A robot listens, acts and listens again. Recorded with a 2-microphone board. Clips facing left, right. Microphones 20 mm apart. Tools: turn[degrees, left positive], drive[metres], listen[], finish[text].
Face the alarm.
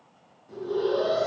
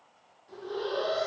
Action: turn[-90]
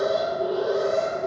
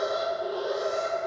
Action: finish[Facing the alarm.]